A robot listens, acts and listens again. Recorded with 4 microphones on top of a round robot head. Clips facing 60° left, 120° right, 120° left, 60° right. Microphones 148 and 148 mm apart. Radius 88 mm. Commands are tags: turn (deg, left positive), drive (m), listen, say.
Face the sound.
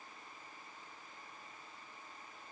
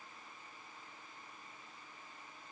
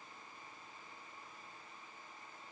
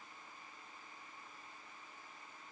<listen/>
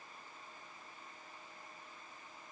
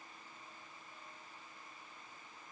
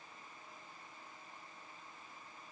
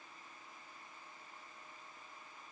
<listen/>
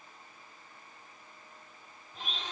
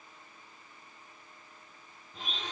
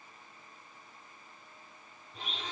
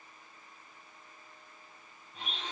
<turn deg="-170"/>
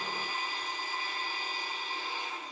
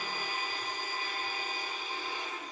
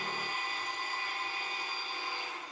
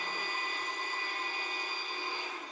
<turn deg="-75"/>
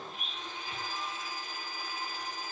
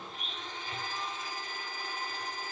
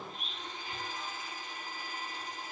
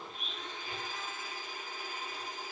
<turn deg="-20"/>
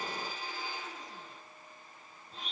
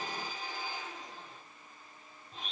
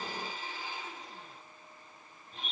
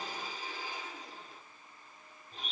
<say>Facing the blender.</say>